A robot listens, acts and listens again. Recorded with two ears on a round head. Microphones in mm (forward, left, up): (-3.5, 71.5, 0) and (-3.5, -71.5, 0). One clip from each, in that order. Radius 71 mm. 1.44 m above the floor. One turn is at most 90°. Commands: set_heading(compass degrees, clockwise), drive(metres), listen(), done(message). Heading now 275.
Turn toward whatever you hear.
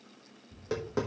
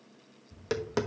set_heading(340)
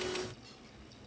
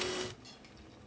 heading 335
listen()
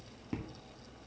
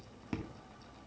set_heading(5)
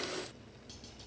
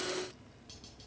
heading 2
listen()
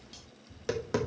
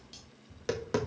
done("Found it: tapping, straight ahead.")